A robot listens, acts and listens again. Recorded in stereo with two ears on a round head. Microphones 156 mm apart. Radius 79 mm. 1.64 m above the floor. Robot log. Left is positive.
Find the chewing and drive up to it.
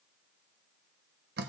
cmd idle
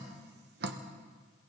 cmd idle
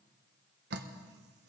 end: I can't make out chewing to turn to.